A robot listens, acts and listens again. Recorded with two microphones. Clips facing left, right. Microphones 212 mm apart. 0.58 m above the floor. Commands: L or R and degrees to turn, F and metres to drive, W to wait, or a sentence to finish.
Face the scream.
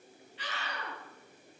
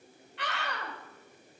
R70
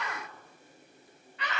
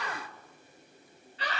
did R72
R30
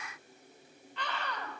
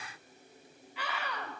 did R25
Facing the scream.